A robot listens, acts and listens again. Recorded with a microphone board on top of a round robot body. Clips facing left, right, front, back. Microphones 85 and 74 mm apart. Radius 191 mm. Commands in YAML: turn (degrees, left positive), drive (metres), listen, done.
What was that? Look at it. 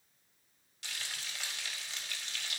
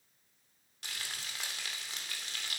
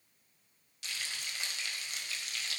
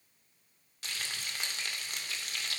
turn: -135
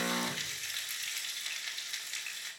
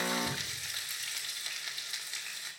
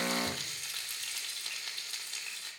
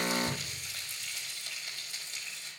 done: "Found it: frying, straight ahead, 2 to 4 m away."